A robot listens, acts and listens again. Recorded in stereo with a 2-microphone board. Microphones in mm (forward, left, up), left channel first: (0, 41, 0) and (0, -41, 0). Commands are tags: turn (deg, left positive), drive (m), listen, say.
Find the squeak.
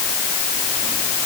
<listen/>
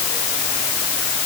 <listen/>
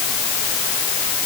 <say>I can't make out a squeak to turn to.</say>